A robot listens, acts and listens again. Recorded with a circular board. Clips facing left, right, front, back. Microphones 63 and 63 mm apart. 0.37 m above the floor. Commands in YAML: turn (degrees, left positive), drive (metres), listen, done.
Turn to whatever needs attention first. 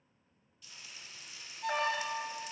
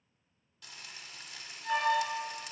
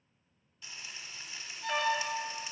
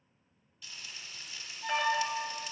turn: 100
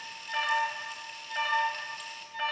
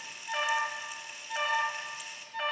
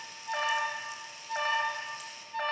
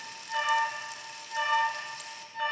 done: "Facing the alarm."